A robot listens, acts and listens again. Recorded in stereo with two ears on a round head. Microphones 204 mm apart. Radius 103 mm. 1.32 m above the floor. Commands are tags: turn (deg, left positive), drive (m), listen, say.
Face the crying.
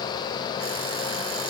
<listen/>
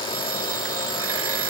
<listen/>
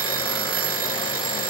<say>I can't make out crying, only an alarm clock.</say>